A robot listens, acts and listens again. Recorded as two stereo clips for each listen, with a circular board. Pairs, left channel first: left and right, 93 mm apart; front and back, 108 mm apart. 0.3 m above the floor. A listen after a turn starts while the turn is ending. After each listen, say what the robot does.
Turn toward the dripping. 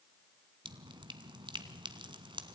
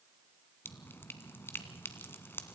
Turn 65° right.
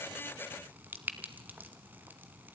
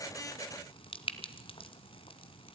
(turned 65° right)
Turn 20° right.
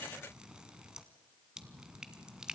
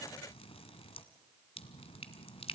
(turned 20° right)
Turn 10° right.
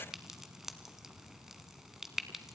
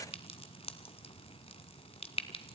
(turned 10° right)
Facing the dripping.